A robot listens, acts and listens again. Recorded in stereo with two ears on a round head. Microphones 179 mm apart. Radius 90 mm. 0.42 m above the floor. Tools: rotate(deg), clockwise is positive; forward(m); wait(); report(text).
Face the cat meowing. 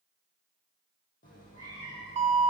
rotate(-35)
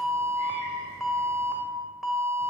rotate(15)
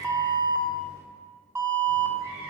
rotate(25)
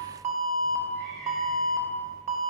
report("Found it: a cat meowing, straight ahead, 2 to 4 m away.")